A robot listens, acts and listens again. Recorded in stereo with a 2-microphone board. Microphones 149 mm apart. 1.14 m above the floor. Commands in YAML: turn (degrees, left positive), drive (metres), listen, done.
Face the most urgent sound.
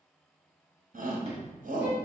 turn: -90
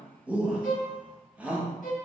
turn: -10
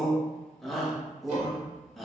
done: "Found it: a shout, straight ahead, under 1 m away."